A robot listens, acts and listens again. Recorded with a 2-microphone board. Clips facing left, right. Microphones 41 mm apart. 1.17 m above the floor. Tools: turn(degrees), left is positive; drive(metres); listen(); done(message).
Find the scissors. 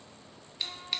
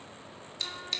turn(degrees=30)
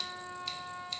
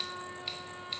listen()
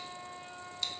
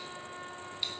listen()
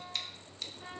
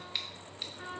turn(degrees=-20)
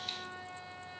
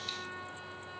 listen()
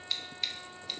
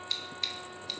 done("Facing the scissors, 1 to 2 m away.")